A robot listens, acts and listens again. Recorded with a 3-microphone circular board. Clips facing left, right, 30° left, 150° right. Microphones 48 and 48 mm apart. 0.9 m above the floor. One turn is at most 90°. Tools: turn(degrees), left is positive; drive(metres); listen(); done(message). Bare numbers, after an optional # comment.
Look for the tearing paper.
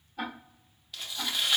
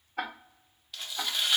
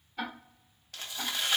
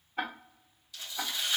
done("Found it: tearing paper, straight ahead.")